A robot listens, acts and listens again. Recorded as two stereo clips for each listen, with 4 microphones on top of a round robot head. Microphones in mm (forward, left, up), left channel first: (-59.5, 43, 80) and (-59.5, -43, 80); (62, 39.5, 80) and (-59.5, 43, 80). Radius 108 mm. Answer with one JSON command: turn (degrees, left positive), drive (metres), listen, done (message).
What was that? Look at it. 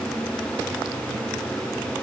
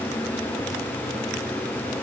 {"listen": true}
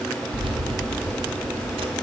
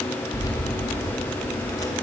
{"turn": -65}
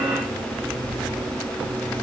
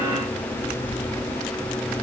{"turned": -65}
{"turn": -15}
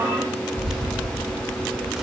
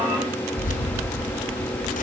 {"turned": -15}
{"done": "Found it: keys jangling, straight ahead."}